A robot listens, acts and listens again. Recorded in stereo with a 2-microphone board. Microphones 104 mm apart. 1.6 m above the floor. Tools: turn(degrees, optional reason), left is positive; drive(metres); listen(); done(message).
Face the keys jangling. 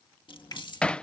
turn(degrees=45, reason="The keys jangling: about 45° left or 135° left.")
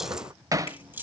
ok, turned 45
turn(degrees=-20, reason="So it is at 20° right.")
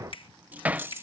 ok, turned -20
turn(degrees=-25, reason="The keys jangling is now 25° right.")
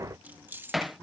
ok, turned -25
turn(degrees=-20, reason="The keys jangling is now 20° right.")
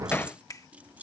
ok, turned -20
turn(degrees=-15, reason="The keys jangling is now 15° right.")
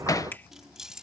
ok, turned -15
done("Facing the keys jangling.")